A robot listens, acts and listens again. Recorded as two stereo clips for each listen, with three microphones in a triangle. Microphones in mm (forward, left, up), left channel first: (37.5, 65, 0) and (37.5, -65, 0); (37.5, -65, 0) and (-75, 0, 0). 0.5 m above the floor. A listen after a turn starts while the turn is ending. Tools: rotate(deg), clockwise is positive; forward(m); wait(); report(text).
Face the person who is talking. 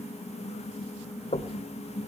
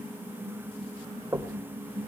wait()
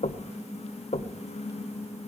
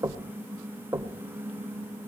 wait()
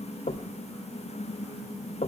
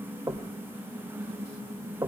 report("I can't make out anyone speaking to turn to.")